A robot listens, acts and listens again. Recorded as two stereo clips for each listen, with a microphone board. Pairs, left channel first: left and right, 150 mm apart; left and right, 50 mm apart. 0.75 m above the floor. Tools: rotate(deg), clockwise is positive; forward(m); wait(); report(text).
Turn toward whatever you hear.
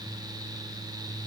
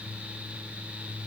wait()
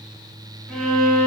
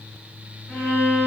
rotate(-30)
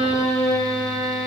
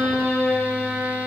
rotate(20)
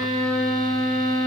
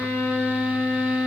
report("Found it: a violin, straight ahead.")